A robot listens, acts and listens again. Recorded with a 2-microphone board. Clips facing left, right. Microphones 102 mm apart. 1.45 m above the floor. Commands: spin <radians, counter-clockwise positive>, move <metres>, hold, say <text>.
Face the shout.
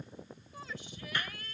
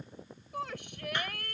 spin -1.13
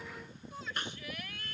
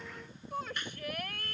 spin -0.87
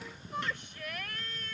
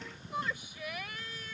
say Facing the shout.